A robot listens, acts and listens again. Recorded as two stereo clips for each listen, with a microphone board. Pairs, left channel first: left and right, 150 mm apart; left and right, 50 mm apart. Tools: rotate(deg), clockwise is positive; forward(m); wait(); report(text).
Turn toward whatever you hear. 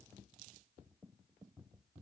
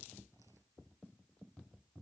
wait()
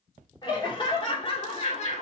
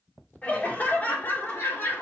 rotate(-50)
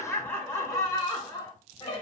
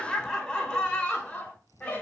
rotate(-35)
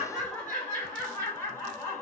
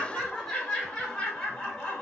rotate(-10)
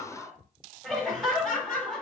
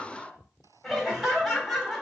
report("Found it: laughter, straight ahead.")